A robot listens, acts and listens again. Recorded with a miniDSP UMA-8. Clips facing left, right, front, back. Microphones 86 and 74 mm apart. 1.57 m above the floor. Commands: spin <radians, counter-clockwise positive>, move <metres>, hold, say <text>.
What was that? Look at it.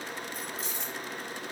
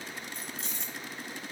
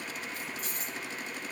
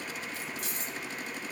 spin 3.14
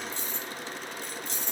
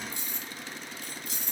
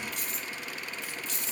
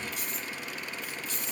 say Found it: keys jangling, straight ahead, 2 to 4 m away.